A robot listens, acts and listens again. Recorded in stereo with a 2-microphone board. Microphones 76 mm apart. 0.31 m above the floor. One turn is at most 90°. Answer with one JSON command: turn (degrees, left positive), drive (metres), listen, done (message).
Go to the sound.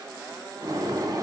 {"turn": -50}
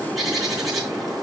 {"drive": 1.0}
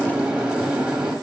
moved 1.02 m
{"turn": -20}
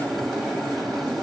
{"drive": 1.0}
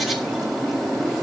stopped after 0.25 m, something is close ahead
{"done": "I am next to the bird."}